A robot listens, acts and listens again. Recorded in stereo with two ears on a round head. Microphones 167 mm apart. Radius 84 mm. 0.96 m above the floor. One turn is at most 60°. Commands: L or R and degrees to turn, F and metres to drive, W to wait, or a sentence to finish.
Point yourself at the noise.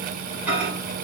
R30
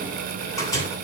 L20
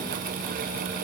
W
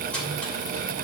L10
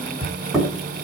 Facing the microwave.